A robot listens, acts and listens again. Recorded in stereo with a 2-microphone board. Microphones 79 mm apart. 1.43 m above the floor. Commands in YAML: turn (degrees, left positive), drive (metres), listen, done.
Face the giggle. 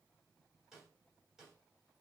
listen: true
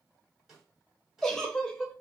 turn: 30
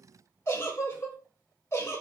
turn: 145
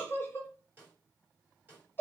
turn: 30
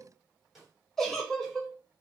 done: "Found it: a giggle, straight ahead."